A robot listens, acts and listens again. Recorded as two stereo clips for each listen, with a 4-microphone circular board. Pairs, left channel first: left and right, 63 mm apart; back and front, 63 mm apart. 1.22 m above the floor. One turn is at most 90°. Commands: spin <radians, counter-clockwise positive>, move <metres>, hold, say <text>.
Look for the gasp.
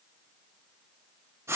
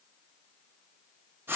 hold
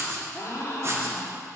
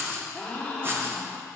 spin 1.57
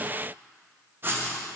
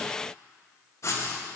spin 0.35
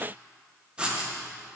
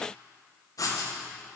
say I heard a gasp from this way, but can't make it out now.